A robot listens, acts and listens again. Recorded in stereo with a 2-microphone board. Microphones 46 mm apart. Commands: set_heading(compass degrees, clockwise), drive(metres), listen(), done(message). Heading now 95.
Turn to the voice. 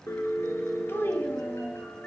set_heading(40)
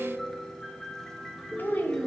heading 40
set_heading(345)
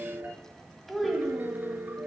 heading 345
done("Found it: a child speaking, straight ahead.")